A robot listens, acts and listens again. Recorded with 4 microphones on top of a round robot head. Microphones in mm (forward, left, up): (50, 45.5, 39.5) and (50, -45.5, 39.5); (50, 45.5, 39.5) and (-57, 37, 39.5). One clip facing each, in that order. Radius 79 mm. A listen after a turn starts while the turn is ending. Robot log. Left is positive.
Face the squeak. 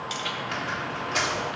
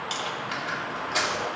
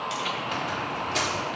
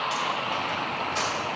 end: Found it: a squeak, straight ahead, 2 to 4 m away.